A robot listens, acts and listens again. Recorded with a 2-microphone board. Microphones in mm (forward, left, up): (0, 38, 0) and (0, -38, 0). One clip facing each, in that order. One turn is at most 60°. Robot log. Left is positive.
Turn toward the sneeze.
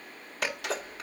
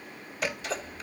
note: The sneeze: about 75° left or 105° left.
cmd yaw +60
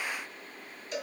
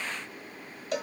cmd idle
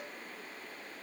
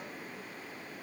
end: I heard a sneeze, but can't make it out now. It was about 15° left or 45° left.